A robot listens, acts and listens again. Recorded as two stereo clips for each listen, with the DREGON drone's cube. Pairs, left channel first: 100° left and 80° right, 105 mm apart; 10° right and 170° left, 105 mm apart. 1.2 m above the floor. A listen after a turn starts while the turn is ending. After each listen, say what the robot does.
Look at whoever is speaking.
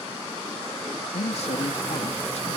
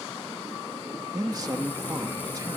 Turn 115° left.
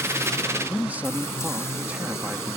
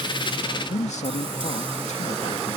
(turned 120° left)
Facing the man speaking.